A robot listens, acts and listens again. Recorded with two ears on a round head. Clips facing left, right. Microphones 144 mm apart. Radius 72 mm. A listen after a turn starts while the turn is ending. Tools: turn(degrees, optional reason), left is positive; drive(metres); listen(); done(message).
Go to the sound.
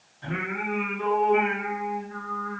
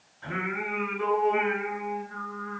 turn(degrees=25, reason="The singing: about 25° left or 155° left.")
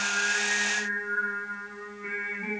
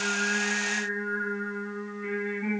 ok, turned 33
turn(degrees=-10, reason="So it is at 10° right.")
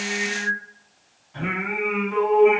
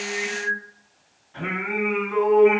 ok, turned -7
drive(metres=1.0)
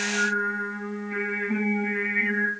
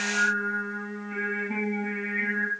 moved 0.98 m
drive(metres=1.0)
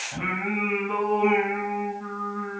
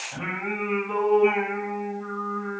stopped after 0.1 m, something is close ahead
done("I am next to the singing.")